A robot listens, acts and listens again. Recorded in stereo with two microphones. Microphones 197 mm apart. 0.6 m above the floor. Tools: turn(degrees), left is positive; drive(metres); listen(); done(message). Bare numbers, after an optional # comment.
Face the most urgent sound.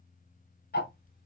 listen()
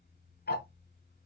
listen()
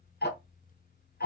done("I can't make out anything urgent, only ticking.")